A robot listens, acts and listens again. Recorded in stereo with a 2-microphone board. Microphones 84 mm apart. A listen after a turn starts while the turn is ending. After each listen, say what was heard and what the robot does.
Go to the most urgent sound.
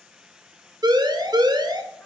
The siren: about 55° right or 125° right. Turn 55° right.
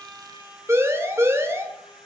So it is at 40° right. Turn 40° right.
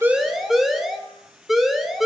Drive 1.0 m forward.
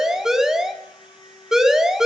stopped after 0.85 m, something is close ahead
The siren is now 10° right. Turn 10° right.
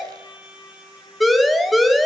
Arrived at the siren, straight ahead.